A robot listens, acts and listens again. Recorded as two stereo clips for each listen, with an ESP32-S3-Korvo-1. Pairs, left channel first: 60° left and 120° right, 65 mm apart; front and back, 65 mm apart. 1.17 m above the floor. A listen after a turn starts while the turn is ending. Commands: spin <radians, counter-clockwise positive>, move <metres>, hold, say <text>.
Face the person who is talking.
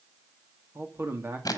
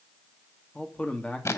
spin -1.13
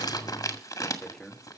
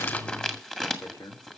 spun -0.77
spin -0.35
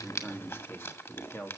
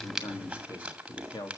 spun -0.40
say Facing the man speaking.